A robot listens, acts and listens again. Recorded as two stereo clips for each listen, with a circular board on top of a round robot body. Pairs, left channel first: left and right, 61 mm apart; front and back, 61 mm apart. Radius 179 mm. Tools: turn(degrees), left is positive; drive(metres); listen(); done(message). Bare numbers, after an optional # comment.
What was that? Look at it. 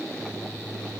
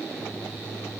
listen()
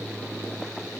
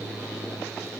listen()
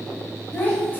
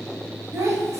# The child speaking: 150° left.
turn(150)
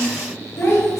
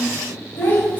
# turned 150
# The child speaking is now 60° left.
turn(60)
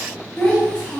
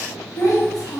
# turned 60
# The child speaking is now 15° left.
turn(15)
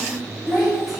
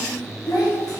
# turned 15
done("Found it: a child speaking, straight ahead.")